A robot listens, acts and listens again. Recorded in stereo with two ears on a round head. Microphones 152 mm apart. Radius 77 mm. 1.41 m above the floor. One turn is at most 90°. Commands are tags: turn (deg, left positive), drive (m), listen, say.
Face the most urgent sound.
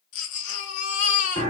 <turn deg="45"/>
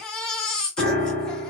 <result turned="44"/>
<say>Found it: a baby crying, straight ahead.</say>